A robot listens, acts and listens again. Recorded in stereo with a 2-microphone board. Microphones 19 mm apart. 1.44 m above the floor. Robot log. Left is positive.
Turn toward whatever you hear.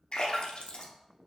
note: The splash: about 70° left or 110° left.
cmd yaw +70
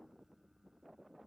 cmd idle
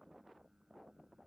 end: I heard a splash, but can't make it out now. It was about straight ahead or 40° left.